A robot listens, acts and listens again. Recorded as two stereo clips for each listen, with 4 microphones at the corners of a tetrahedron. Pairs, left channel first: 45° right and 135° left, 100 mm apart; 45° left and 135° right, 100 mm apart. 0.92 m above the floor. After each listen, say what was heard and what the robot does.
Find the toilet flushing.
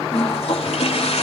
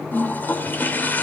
The toilet flushing: 25° right. Turn 25° right.
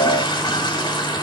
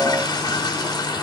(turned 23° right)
Facing the toilet flushing.